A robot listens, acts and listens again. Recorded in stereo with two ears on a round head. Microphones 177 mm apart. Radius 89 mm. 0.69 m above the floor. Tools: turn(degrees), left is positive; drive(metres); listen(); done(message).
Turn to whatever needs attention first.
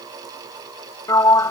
listen()
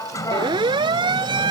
turn(degrees=-25)
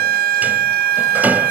turn(degrees=-130)
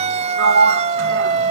turn(degrees=-35)
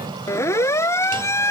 turn(degrees=15)
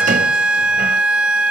done("Found it: a siren, straight ahead.")